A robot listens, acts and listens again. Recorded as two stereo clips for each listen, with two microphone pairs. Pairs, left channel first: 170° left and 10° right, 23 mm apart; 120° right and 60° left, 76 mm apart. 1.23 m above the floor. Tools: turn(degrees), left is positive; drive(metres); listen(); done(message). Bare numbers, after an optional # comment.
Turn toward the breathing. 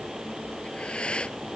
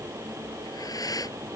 # The breathing: 160° right.
turn(-160)
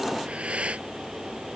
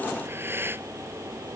done("Facing the breathing.")